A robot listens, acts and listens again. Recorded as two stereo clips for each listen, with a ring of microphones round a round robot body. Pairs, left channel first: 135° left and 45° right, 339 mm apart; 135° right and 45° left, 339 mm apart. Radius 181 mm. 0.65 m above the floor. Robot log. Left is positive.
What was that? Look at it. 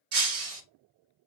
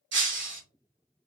note: The breaking glass: 15° right.
cmd yaw -15
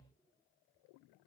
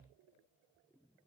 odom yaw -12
end: Facing where the breaking glass came from. I can't hear it now.